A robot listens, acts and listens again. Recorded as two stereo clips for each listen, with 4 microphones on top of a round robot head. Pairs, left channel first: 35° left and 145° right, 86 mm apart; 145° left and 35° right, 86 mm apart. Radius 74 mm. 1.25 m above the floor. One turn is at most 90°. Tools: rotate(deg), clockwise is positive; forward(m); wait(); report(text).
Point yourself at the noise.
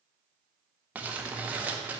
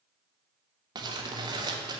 rotate(70)
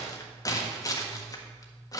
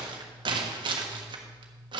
rotate(10)
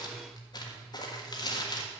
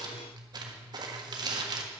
report("Facing the crumpling, 1 to 2 m away.")